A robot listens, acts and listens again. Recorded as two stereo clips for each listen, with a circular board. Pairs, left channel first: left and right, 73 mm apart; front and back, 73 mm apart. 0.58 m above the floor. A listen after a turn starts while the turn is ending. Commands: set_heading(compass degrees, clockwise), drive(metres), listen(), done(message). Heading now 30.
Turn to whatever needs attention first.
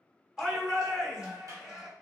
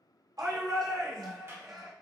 set_heading(200)
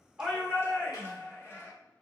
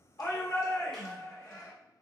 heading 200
set_heading(160)
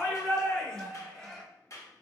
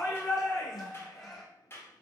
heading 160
set_heading(150)
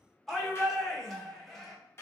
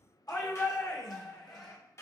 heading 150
done("Facing the shout, 1 to 2 m away.")